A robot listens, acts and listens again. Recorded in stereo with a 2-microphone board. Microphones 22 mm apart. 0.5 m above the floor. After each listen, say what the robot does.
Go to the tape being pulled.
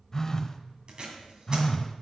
Turn 40° right.
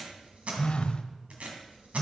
Turn 100° right.
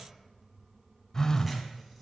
Drive 1.0 m forward.
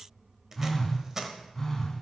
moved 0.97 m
Turn 20° right.
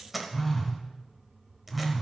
Drive 1.0 m forward.
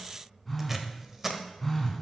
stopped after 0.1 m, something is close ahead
Turn 15° right.
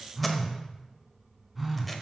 Keep listening.
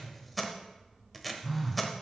Arrived at the tape being pulled, straight ahead.